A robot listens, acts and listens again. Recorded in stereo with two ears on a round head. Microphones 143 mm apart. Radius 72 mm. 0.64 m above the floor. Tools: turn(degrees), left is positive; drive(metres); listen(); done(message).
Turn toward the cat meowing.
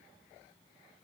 listen()
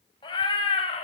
turn(degrees=35)
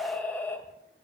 turn(degrees=15)
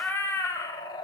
turn(degrees=25)
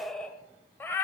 turn(degrees=15)
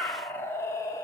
turn(degrees=20)
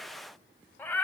turn(degrees=10)
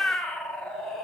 done("Facing the cat meowing, 2 to 4 m away.")